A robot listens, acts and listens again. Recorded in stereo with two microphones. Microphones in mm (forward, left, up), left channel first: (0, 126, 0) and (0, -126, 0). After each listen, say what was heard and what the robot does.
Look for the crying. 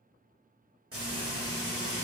Keep listening.
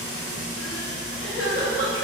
The crying: about 70° left or 110° left. Turn 70° left.
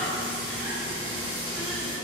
Keep listening.
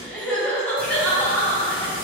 Found it: crying, straight ahead, under 1 m away.